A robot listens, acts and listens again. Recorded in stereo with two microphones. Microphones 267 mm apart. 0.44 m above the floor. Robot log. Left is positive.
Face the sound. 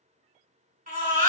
note: The baby crying: about 35° right or 145° right.
cmd yaw -35
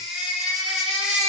end: Facing the baby crying, 1 to 2 m away.